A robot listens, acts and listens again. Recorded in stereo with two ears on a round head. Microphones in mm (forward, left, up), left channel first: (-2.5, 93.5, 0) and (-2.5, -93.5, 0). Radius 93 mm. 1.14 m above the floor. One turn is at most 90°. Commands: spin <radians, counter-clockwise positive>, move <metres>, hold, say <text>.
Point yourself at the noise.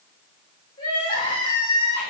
spin 0.44
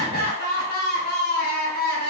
spin 1.57
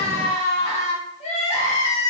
spin 0.61
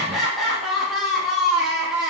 say Found it: crying, straight ahead.